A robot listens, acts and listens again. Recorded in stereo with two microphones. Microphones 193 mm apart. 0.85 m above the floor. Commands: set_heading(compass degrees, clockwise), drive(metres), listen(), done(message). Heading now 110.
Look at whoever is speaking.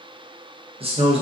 set_heading(140)
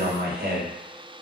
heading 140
set_heading(260)
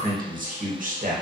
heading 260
set_heading(310)
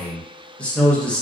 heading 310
done("Facing the man speaking, under 1 m away.")